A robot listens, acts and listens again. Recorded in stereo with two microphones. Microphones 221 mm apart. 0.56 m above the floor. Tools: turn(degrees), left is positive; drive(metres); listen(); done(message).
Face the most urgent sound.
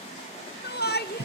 turn(degrees=50)
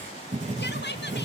turn(degrees=65)
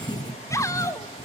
turn(degrees=15)
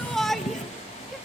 done("Facing the shout, 1 to 2 m away.")